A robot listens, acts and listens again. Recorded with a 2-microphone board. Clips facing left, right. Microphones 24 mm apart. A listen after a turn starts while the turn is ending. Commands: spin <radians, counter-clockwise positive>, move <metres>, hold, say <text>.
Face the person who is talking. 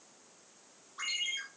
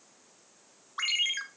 hold
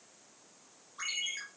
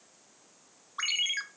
hold
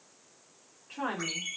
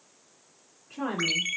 spin 1.57
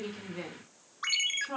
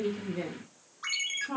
say Found it: a woman speaking, straight ahead, 2 to 4 m away.